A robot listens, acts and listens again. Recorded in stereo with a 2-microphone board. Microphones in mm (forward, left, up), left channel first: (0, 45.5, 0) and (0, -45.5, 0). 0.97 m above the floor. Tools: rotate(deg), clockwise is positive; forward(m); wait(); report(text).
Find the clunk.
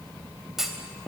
rotate(30)
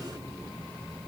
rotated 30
wait()
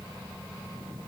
report("I heard a clunk, but can't make it out now. It was about 25° left or 145° right.")